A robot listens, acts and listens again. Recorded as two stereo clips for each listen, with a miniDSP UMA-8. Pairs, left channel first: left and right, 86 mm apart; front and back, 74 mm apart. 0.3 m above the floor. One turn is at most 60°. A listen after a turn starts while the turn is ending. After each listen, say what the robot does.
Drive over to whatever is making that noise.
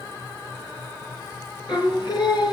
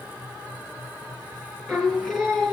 Turn 60° left.
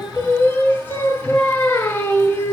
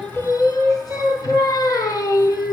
Turn 25° left.
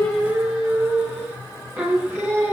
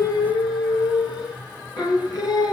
Turn 25° right.
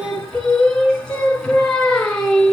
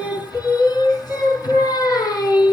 Turn 10° left.
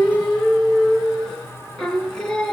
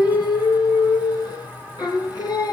Drive 1.0 m forward.
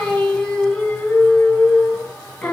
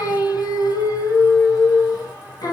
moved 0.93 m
Turn 10° left.
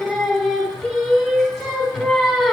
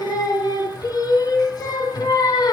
Drive 1.0 m forward.
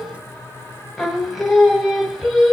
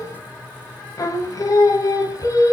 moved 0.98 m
Drive 1.0 m forward.
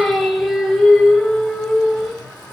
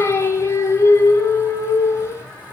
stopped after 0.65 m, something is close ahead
Arrived at the singing, straight ahead.